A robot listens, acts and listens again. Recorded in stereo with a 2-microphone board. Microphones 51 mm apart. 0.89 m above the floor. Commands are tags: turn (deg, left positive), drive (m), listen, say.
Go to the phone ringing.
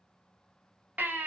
<listen/>
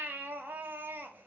<listen/>
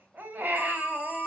<turn deg="20"/>
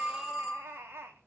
<drive m="1.0"/>
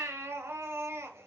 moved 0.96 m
<listen/>
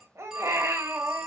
<turn deg="-10"/>
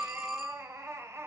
<drive m="1.0"/>
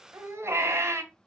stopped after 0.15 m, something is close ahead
<listen/>
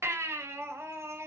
<listen/>
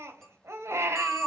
<say>I am next to the phone ringing.</say>